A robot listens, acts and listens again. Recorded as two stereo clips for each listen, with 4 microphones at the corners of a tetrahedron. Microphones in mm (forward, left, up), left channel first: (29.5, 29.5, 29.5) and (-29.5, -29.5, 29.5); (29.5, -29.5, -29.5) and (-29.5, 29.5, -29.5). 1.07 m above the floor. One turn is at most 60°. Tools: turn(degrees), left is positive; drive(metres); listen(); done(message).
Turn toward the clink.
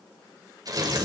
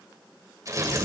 listen()
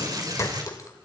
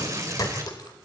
done("Facing the clink.")